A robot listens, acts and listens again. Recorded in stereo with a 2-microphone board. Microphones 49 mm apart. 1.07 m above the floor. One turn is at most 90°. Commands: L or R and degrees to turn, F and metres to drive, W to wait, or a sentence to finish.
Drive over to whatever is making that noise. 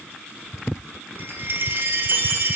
R50
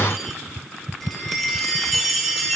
F1.0
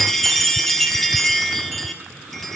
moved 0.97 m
F1.0
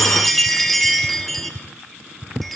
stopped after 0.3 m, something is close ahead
I am next to the chime.